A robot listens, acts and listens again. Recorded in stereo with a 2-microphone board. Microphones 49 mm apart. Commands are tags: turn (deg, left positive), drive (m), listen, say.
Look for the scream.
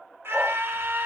<turn deg="-60"/>
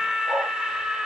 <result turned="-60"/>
<turn deg="-15"/>
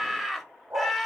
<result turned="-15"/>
<say>Found it: a scream, straight ahead.</say>